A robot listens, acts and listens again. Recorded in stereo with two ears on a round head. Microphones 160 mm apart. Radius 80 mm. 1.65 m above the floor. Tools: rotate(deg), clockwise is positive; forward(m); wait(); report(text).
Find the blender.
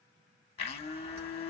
rotate(-35)
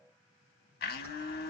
rotate(-105)
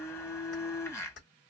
rotate(-20)
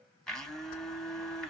report("Facing the blender.")